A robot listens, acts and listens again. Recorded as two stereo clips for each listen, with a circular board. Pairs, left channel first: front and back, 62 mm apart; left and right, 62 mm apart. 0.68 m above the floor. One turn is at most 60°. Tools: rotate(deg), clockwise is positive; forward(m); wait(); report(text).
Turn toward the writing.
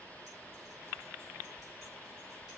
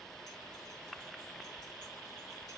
wait()
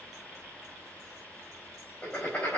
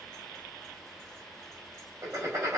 rotate(60)
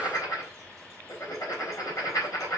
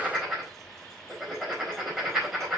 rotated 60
rotate(10)
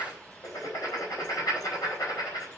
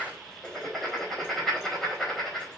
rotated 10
report("Facing the writing.")